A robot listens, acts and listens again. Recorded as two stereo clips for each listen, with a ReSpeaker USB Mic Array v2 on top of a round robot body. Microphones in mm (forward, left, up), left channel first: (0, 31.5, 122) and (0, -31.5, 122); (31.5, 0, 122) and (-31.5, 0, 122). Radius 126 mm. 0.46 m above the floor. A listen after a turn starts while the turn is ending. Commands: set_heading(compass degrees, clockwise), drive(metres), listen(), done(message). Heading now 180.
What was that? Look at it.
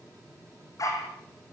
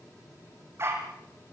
set_heading(50)
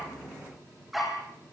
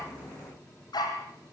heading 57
done("Facing the dog barking.")